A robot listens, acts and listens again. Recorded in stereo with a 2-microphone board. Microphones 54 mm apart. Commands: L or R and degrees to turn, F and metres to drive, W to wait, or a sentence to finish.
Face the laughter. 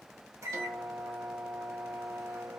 W
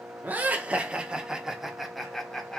L30
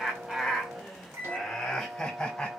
L30
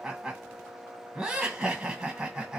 R20
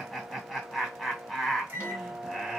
Found it: laughter, straight ahead, 1 to 2 m away.